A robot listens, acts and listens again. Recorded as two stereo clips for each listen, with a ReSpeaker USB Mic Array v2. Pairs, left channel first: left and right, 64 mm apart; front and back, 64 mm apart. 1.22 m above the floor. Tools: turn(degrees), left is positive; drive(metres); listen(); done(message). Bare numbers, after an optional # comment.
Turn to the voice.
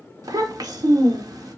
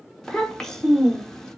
# The child speaking: 80° right.
turn(-80)
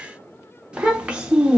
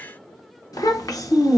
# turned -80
# The child speaking is now 15° right.
turn(-15)
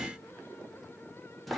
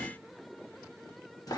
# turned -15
done("Found it: a child speaking, straight ahead.")